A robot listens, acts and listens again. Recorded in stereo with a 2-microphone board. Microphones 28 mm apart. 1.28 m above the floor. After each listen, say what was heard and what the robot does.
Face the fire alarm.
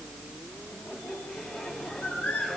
Keep listening.
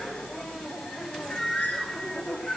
Keep listening.
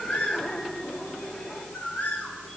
I can't make out a fire alarm to turn to.